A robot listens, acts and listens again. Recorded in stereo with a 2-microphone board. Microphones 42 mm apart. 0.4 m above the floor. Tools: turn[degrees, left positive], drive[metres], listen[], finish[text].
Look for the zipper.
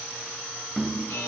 Action: listen[]
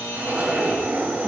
Thought: The zipper: about 40° right or 140° right.
Action: turn[-40]
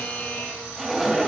Action: finish[Found it: a zipper, straight ahead.]